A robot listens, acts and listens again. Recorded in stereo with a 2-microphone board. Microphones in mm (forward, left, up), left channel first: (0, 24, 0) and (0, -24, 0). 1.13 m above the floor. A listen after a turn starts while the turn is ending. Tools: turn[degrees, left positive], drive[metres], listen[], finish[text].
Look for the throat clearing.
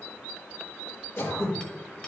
Thought: The throat clearing: about 70° left or 110° left.
Action: turn[70]
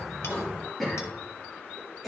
Action: finish[Facing the throat clearing, 2 to 4 m away.]